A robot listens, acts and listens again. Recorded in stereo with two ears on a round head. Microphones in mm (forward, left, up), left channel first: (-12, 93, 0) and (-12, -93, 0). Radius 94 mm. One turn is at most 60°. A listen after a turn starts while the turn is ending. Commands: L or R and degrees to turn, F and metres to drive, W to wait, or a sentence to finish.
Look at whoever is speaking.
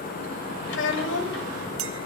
L60
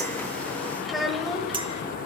Found it: a child speaking, straight ahead.